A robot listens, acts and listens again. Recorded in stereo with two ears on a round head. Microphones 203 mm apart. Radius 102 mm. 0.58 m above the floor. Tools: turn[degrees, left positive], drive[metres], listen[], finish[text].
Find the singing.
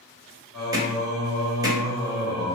Thought: The singing: about 40° right or 140° right.
Action: turn[-40]
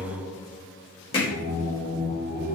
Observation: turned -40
Thought: So it is at 10° right.
Action: turn[-10]
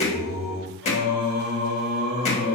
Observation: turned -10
Action: finish[Found it: singing, straight ahead, 1 to 2 m away.]